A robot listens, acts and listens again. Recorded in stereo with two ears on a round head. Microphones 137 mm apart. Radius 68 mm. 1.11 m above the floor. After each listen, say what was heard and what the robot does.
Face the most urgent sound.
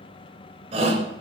The shout: about 40° right or 140° right. Turn 40° right.
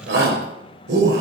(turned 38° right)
So it is at 100° right. Turn 100° right.
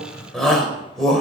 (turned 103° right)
Facing the shout.